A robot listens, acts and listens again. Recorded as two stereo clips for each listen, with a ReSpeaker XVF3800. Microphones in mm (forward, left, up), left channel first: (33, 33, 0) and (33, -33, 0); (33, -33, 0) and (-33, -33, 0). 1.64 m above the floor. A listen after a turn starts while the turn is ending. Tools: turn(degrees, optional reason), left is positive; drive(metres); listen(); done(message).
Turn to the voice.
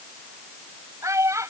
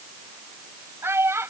turn(degrees=-130, reason="The child speaking: 130° right.")
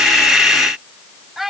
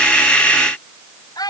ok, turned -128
done("Found it: a child speaking, straight ahead.")